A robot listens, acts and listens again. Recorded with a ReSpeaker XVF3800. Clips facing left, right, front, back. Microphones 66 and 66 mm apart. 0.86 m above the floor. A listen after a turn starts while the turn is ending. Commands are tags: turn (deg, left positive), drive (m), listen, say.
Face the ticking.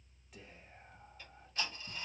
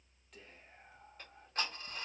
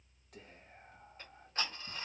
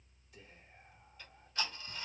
<turn deg="-55"/>
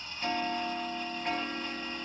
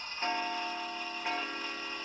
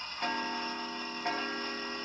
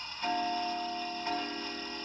<say>Facing the ticking.</say>